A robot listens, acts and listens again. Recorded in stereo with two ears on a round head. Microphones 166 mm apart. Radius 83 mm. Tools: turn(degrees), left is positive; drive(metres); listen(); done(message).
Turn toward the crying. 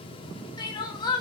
turn(degrees=20)
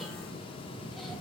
listen()
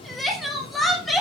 done("Found it: crying, straight ahead.")